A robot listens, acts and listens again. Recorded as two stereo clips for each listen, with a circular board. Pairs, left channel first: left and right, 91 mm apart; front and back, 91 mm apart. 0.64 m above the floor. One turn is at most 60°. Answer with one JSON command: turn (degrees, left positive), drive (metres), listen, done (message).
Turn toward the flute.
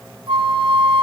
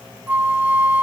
{"turn": -60}
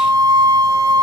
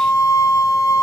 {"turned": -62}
{"turn": -50}
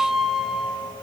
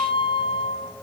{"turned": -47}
{"done": "Found it: a flute, straight ahead."}